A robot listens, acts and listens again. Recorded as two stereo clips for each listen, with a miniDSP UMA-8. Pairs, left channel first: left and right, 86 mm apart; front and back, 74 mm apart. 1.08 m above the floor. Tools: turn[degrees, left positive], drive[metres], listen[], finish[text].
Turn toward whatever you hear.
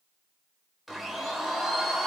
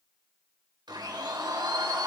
Thought: The blender: straight behind.
Action: turn[180]
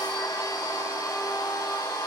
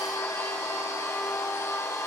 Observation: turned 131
Thought: The blender is now 50° left.
Action: turn[50]
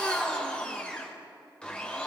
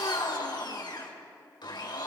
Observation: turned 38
Thought: The blender is now 10° left.
Action: turn[10]
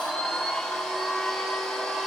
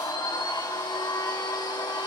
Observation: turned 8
Action: finish[Found it: a blender, straight ahead, 2 to 4 m away.]